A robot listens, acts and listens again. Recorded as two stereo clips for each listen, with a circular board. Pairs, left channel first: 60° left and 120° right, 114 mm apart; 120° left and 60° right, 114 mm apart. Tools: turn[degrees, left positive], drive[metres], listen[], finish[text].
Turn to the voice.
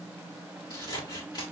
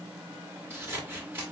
Action: listen[]
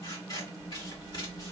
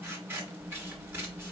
Action: listen[]
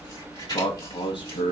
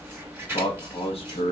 Thought: The man speaking: 100° left.
Action: turn[100]
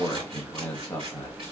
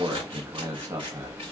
Action: finish[Found it: a man speaking, straight ahead, 1 to 2 m away.]